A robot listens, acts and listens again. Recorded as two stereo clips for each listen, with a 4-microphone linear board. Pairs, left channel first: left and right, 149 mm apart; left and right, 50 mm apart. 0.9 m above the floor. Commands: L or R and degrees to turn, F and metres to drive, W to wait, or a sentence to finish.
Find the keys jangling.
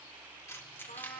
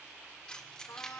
L30
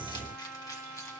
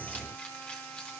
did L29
W
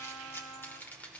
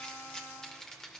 L30
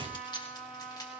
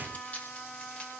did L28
L155
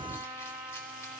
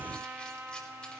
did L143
L10
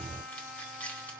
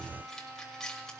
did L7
L10
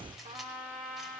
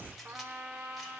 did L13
W
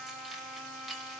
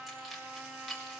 Facing the keys jangling, 2 to 4 m away.